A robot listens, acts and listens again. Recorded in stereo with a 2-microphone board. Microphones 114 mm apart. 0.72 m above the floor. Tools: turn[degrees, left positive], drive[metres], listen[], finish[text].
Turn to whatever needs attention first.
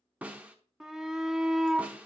Action: turn[-30]
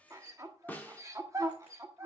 Thought: So it is at 145° right.
Action: turn[-145]
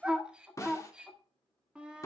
Thought: The shout is now 10° right.
Action: turn[-10]
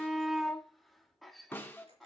Action: finish[Facing the shout.]